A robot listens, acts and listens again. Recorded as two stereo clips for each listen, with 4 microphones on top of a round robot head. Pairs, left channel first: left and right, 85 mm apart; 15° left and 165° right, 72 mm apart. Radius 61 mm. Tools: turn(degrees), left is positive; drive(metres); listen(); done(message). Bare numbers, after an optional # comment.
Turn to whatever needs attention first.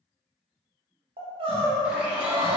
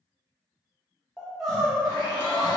# The crying: 80° right.
turn(-80)
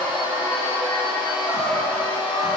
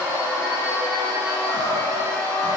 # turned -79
listen()
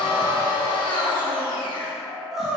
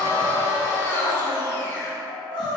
done("Found it: crying, straight ahead.")